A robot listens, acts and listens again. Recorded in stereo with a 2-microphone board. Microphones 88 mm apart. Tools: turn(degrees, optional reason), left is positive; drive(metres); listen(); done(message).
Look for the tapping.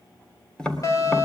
turn(degrees=30)
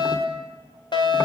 listen()
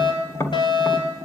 turn(degrees=140, reason="So it is at 140° left.")
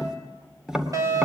turn(degrees=-10, reason="The tapping is now 10° right.")
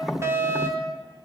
done("Found it: tapping, straight ahead, 2 to 4 m away.")